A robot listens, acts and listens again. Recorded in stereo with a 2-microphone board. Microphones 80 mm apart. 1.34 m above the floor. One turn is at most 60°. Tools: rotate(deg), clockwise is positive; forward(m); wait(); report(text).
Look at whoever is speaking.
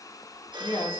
rotate(-60)
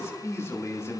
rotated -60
rotate(-35)
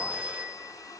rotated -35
wait()
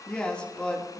rotate(-15)
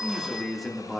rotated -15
report("Facing the man speaking, 2 to 4 m away.")